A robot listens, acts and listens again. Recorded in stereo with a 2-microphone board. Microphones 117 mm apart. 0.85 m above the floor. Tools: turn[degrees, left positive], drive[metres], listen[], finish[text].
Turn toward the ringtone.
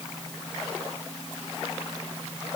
Action: listen[]
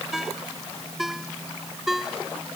Action: turn[-30]
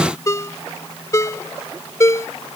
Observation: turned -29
Thought: So it is at 25° left.
Action: turn[25]
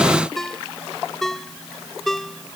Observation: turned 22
Action: finish[Facing the ringtone.]